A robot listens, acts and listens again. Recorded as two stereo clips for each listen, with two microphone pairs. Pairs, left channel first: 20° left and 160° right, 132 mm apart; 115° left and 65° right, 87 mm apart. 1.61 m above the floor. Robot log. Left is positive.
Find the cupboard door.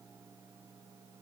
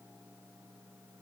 cmd idle
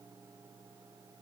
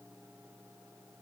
cmd idle
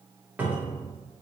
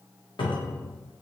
note: The cupboard door: 120° left.
cmd yaw +120
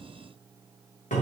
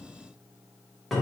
note: The cupboard door is now 30° left.
cmd yaw +30
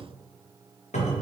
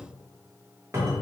note: The cupboard door is now 10° right.
cmd yaw -10
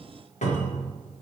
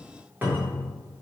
end: Facing the cupboard door, 1 to 2 m away.